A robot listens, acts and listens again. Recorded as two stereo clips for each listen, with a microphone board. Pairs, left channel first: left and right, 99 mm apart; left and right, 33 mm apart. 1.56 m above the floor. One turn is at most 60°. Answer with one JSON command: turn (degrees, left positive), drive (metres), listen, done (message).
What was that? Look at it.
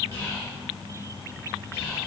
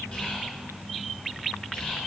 {"turn": 25}
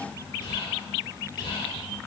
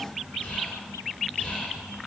{"turn": 60}
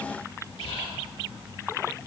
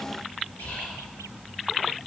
{"turn": 60}
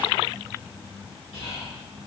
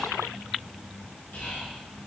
{"turn": 60}
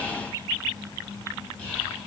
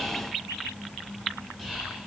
{"turn": 15}
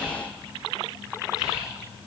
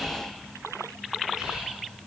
{"done": "Found it: whispering, straight ahead."}